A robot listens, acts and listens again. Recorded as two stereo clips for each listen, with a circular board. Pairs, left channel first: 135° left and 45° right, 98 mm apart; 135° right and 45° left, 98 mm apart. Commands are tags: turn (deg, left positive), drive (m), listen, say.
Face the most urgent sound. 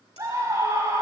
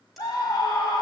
<turn deg="-95"/>
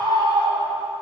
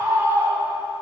<turn deg="-20"/>
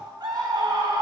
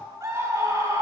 <say>Found it: a scream, straight ahead, 2 to 4 m away.</say>